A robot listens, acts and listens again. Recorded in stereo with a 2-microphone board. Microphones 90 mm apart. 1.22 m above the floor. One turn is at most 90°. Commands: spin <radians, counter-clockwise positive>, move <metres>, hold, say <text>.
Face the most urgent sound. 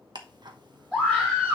spin -0.52
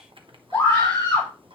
spin 0.35
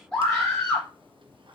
say Facing the scream.